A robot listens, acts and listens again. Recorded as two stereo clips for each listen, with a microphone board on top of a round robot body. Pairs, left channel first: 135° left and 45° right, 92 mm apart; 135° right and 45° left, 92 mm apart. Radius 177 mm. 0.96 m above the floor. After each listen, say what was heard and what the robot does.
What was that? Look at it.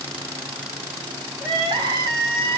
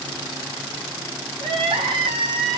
Facing the crying.